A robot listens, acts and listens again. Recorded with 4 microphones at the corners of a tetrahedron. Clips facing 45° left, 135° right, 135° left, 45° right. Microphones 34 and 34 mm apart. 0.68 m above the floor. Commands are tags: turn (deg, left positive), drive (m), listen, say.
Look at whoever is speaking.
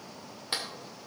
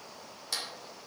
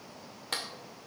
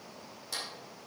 <listen/>
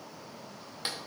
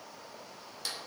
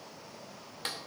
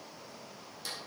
<listen/>
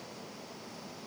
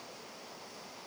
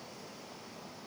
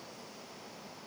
<say>I can't make out anyone speaking, only a clap.</say>